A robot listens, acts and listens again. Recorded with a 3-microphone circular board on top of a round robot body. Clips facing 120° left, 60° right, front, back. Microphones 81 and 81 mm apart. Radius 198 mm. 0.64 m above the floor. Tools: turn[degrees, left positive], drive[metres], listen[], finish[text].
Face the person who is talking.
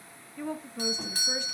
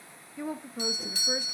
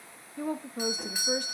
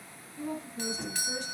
Thought: The woman speaking: 20° left.
Action: turn[20]
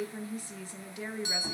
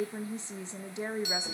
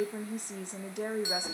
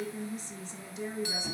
Action: finish[Found it: a woman speaking, straight ahead, 1 to 2 m away.]